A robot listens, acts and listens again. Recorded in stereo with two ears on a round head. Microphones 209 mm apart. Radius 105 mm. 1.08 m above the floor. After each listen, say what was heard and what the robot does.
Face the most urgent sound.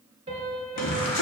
Turn 90° left.
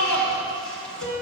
Found it: a shout, straight ahead.